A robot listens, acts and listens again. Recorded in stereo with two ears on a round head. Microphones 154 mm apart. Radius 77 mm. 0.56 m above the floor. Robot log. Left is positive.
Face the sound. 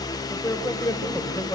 note: The man speaking: about 20° left or 160° left.
cmd yaw +20
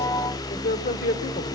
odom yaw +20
note: So it is at 130° left.
cmd yaw +130
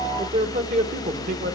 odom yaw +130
note: The man speaking is now 50° right.
cmd yaw -50
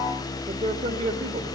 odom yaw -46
note: The man speaking is now 35° right.
cmd yaw -35
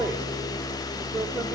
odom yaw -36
note: The man speaking is now 10° right.
cmd yaw -10
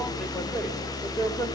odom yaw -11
end: Facing the man speaking.